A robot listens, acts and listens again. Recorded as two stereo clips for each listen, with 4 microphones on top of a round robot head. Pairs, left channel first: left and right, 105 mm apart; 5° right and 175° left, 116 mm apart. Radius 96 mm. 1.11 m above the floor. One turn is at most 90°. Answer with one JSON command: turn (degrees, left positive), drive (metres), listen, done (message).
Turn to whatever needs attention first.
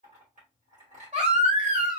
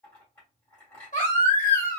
{"turn": -45}
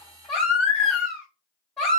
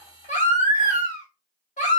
{"done": "Facing the baby crying."}